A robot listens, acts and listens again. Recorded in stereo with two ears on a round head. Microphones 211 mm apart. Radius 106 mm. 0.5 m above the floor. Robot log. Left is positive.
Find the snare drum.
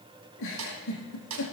cmd yaw -90
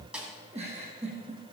end: Found it: a snare drum, straight ahead, 2 to 4 m away.